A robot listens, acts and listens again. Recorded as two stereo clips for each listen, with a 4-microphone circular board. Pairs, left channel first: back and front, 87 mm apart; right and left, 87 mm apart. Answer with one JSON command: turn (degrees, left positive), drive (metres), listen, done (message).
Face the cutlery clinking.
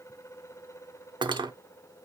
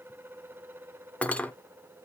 {"turn": -15}
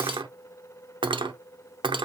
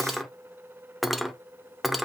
{"done": "Found it: cutlery clinking, straight ahead."}